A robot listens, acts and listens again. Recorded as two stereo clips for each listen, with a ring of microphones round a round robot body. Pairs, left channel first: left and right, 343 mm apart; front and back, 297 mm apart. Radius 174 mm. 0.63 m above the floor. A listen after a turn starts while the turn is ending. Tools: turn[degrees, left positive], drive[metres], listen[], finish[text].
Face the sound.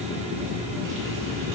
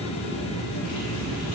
Action: listen[]
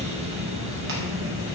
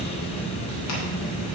Action: listen[]
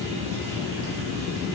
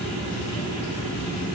Action: finish[I can't make out anything to turn to.]